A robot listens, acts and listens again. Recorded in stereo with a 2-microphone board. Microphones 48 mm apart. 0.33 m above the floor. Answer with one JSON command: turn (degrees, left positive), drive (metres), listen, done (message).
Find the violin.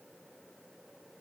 {"listen": true}
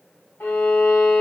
{"turn": 40}
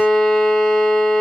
{"done": "Found it: a violin, straight ahead, 1 to 2 m away."}